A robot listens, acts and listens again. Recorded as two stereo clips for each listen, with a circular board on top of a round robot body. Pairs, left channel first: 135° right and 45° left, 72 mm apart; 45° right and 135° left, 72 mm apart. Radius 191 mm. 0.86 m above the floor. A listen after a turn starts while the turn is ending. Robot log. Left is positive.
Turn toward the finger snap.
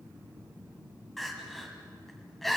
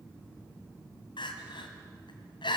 cmd idle
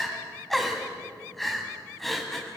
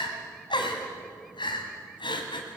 cmd idle
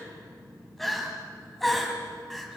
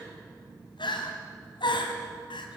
end: I can't make out a finger snap to turn to.